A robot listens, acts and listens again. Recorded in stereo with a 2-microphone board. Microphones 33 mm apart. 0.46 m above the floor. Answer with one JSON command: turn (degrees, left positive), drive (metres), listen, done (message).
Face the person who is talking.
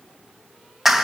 {"listen": true}
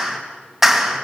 {"listen": true}
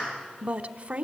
{"turn": -45}
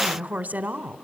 {"turn": -80}
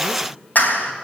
{"listen": true}
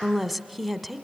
{"done": "Found it: a woman speaking, straight ahead, 1 to 2 m away."}